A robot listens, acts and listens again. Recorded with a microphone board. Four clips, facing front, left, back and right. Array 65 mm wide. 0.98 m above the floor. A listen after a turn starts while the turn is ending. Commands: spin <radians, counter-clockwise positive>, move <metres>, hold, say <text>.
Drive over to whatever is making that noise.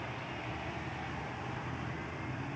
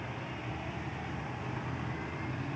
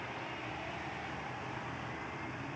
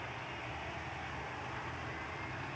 hold
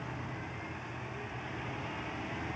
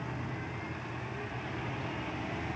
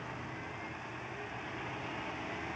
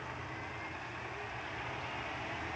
hold
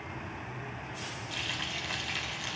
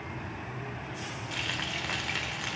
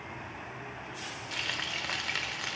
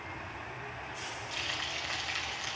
spin 2.44
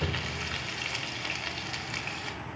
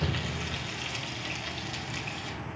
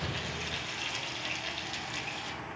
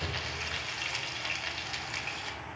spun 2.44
spin -0.44
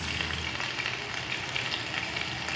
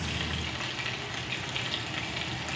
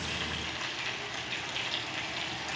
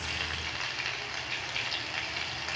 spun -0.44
spin -0.26
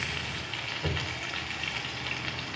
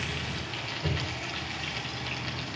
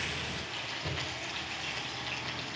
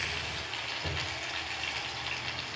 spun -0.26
move 1.0
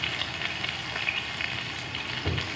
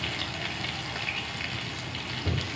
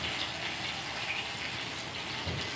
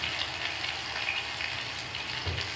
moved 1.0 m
move 1.0
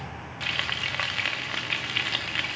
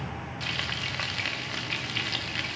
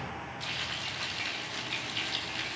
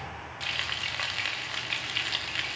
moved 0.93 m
move 1.0
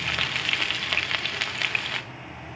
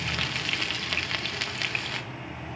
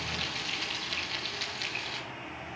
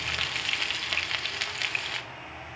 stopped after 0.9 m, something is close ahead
say Arrived at the frying, straight ahead.